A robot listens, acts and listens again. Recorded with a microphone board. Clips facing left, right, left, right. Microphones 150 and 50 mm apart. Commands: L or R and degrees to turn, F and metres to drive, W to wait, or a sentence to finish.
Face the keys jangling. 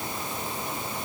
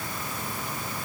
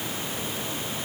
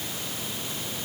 W
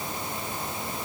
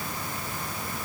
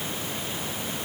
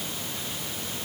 W
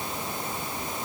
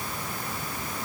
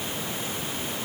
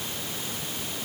I can't make out keys jangling to turn to.